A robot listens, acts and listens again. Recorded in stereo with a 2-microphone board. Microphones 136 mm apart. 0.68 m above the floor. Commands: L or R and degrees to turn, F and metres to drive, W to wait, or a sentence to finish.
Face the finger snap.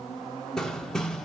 W
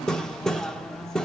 W
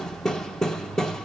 I can't make out a finger snap to turn to.